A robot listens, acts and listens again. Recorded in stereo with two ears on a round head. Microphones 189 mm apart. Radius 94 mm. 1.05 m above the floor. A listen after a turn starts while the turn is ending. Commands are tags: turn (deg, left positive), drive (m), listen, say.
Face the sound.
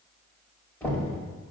<turn deg="30"/>
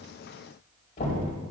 <turn deg="135"/>
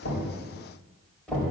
<say>Facing the knocking, over 4 m away.</say>